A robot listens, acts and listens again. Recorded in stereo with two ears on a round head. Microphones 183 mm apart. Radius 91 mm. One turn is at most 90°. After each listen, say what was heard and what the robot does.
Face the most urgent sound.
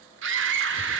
The scream: about 60° right or 120° right. Turn 60° right.
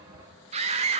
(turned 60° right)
So it is at 35° right. Turn 35° right.
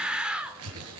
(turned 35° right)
Found it: a scream, straight ahead, 1 to 2 m away.